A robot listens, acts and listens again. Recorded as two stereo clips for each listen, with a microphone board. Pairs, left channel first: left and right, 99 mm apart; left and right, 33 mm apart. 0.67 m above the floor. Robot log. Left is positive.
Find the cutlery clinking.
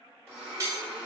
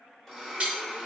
note: The cutlery clinking: about 30° right or 150° right.
cmd yaw -30
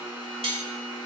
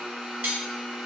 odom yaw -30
note: So it is at 120° right.
cmd yaw -120
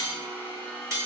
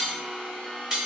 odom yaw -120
note: The cutlery clinking is now 30° right.
cmd yaw -30
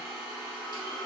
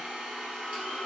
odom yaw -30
cmd idle
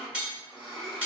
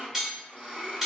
note: The cutlery clinking is now 15° right.
cmd yaw -15
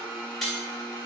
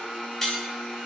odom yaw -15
end: Found it: cutlery clinking, straight ahead.